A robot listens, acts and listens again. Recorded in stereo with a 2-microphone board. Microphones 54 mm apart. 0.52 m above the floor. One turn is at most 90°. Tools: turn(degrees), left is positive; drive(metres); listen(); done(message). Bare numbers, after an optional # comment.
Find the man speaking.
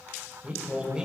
turn(-30)
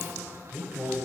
# The man speaking: about 25° right or 155° right.
turn(-25)
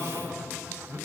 # So it is at 140° right.
turn(-90)
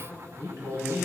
# The man speaking is now 70° right.
turn(-70)
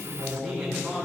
done("Facing the man speaking, 2 to 4 m away.")